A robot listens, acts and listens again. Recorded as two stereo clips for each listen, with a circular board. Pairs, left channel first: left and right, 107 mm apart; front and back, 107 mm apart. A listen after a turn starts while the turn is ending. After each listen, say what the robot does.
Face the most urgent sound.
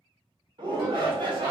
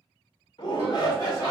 Turn 50° right.
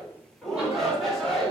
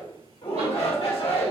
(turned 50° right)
Found it: a shout, straight ahead, 1 to 2 m away.